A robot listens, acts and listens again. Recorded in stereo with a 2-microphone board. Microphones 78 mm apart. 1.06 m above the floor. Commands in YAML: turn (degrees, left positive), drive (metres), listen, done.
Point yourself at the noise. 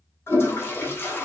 turn: 30
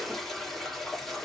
done: "Found it: a toilet flushing, straight ahead, 1 to 2 m away."